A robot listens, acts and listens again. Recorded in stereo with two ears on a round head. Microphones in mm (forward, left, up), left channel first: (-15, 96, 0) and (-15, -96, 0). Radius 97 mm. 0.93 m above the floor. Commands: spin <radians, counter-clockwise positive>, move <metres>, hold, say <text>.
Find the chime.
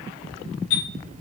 spin 1.05
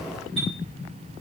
hold
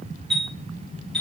say Found it: a chime, straight ahead.